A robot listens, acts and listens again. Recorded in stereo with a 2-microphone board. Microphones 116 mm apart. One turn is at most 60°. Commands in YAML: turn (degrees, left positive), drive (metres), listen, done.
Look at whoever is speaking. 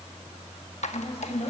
turn: 60
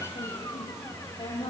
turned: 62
turn: 45
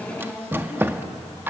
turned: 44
done: "Facing the woman speaking, over 4 m away."